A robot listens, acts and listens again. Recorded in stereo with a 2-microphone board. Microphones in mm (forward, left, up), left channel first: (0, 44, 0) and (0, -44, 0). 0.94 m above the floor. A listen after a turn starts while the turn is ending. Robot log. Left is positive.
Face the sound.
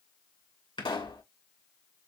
note: The pop: about 70° left or 110° left.
cmd yaw +70
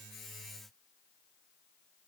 cmd idle
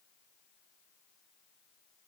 end: I heard a pop, but can't make it out now. It was about straight ahead or 40° left.